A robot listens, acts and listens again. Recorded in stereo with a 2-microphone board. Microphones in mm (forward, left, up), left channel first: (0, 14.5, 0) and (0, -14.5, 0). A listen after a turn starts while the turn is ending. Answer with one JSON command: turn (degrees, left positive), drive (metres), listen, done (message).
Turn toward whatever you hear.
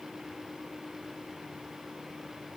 {"listen": true}
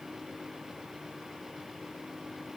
{"listen": true}
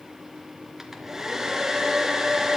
{"turn": -30}
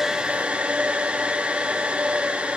{"turn": -140}
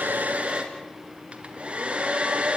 {"turn": -45}
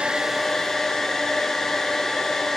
{"turn": 10}
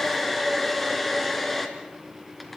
{"done": "Facing the hair dryer, 2 to 4 m away."}